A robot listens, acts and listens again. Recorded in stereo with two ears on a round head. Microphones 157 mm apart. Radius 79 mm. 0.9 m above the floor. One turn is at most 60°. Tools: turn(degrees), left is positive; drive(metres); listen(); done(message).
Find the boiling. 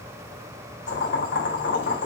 turn(degrees=60)
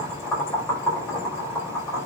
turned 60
turn(degrees=15)
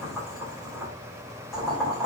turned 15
done("Facing the boiling, over 4 m away.")